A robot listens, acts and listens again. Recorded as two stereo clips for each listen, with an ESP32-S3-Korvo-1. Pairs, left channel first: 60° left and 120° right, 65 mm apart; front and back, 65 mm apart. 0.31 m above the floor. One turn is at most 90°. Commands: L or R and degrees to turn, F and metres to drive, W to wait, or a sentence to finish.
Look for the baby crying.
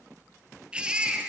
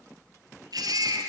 L90
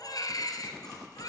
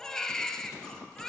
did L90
L80
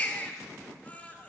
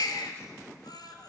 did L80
R10
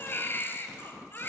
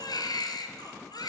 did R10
Found it: a baby crying, straight ahead, 2 to 4 m away.